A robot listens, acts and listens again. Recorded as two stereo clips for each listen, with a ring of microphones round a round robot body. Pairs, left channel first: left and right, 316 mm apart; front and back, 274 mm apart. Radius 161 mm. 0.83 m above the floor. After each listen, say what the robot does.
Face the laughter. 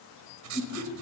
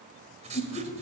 Turn 50° left.
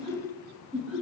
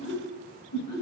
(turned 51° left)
Found it: laughter, straight ahead.